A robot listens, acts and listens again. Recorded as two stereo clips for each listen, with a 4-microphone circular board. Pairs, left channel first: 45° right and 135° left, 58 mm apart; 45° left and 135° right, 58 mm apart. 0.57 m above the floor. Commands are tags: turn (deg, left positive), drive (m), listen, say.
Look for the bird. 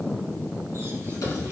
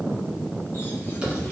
<listen/>
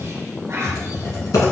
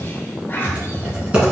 <listen/>
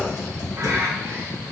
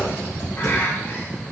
<turn deg="95"/>
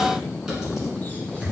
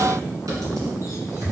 <listen/>
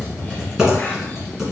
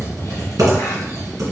<listen/>
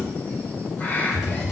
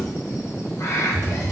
<turn deg="15"/>
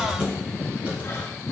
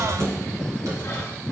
<listen/>
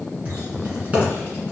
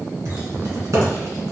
<listen/>
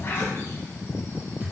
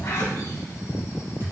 <say>Facing where the bird came from. I can't hear it now.</say>